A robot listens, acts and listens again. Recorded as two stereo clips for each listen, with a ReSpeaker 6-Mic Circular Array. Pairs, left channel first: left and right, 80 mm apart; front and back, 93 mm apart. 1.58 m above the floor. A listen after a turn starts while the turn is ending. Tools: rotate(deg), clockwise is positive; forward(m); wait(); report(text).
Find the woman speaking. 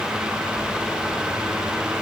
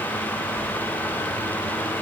wait()
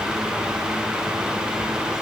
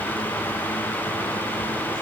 wait()
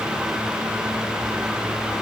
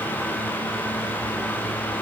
report("I can't make out a woman speaking.")